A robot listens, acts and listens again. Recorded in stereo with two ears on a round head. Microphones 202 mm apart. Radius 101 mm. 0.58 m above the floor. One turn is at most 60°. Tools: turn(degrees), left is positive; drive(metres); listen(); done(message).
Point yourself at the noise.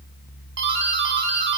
turn(degrees=-50)
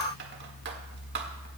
listen()
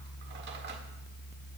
listen()
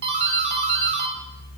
turn(degrees=-60)
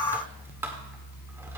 listen()
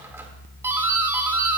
turn(degrees=-15)
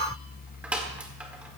done("Facing the doorbell.")